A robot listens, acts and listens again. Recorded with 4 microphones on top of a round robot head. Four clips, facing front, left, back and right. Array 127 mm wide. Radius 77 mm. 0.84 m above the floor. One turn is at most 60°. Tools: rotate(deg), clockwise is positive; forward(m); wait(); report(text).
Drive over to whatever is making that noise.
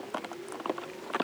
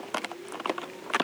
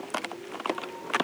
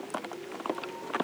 wait()
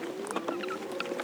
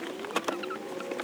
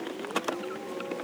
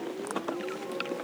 wait()
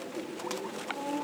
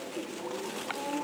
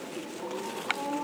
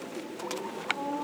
report("I can't make out anything to turn to.")